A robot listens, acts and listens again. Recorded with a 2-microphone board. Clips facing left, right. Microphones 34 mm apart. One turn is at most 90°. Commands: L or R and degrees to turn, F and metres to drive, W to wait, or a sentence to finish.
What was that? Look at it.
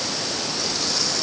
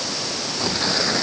R35
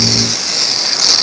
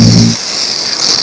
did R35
Facing the tearing paper.